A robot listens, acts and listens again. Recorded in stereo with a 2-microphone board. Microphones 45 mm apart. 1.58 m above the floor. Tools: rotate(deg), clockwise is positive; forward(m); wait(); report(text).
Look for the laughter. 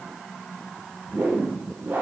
wait()
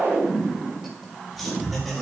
rotate(30)
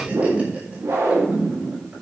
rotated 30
wait()
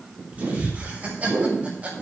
rotate(145)
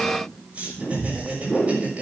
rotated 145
rotate(25)
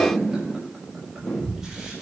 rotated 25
wait()
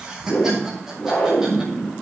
report("Facing the laughter, over 4 m away.")